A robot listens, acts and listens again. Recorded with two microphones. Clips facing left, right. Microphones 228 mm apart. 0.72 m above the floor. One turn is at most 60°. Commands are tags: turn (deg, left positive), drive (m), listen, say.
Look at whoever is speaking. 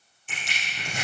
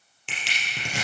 <listen/>
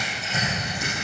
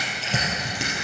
<listen/>
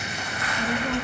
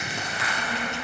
<turn deg="60"/>
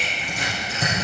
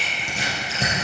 <turn deg="15"/>
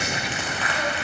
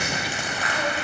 <listen/>
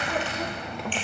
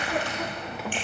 <say>Found it: a child speaking, straight ahead, under 1 m away.</say>